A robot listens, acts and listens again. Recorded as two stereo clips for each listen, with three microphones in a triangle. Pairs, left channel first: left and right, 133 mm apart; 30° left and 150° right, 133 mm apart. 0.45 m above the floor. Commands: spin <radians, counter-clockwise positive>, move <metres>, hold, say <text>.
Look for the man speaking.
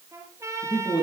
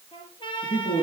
spin 0.61
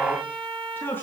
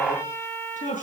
spin 0.26
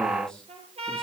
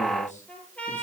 hold
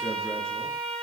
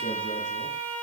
hold
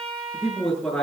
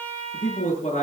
say Facing the man speaking, over 4 m away.